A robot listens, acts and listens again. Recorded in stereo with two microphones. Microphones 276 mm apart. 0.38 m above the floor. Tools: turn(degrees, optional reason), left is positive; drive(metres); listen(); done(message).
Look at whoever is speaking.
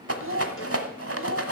turn(degrees=-50, reason="The child speaking: about 50° right or 130° right.")
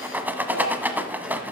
listen()
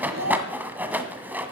turn(degrees=-75, reason="So it is at 75° right.")
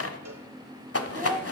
turn(degrees=-10, reason="The child speaking is now 10° right.")
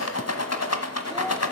listen()
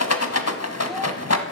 listen()
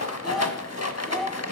done("Found it: a child speaking, straight ahead.")